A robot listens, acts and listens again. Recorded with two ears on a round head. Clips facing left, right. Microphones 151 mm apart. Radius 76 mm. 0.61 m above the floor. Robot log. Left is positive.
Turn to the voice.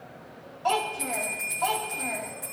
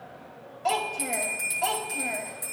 note: The child speaking: about 30° right or 150° right.
cmd yaw -30
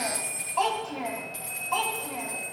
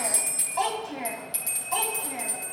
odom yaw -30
note: So it is at 15° right.
cmd yaw -15
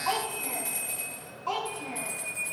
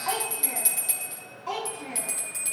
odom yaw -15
note: The child speaking is now 15° right.
cmd yaw -15
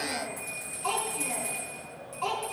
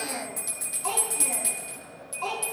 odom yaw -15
end: Facing the child speaking, over 4 m away.